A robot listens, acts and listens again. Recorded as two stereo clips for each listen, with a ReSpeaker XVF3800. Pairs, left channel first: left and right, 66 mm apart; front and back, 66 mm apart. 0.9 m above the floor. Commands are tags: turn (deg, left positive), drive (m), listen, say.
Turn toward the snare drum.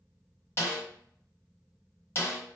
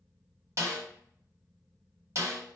<turn deg="140"/>
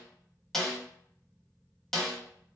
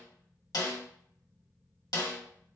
<turn deg="10"/>
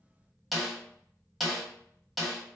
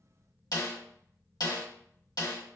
<say>Facing the snare drum, 1 to 2 m away.</say>